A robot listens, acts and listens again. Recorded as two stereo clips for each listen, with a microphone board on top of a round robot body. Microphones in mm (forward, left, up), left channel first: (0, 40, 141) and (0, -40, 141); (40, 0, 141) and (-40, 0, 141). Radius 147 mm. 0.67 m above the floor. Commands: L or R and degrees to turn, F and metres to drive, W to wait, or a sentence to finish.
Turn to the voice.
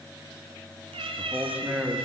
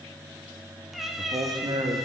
R170
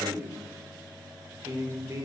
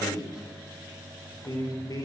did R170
R40
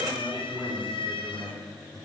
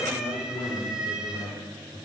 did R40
R10
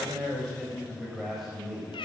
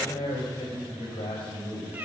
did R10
Found it: a man speaking, straight ahead, over 4 m away.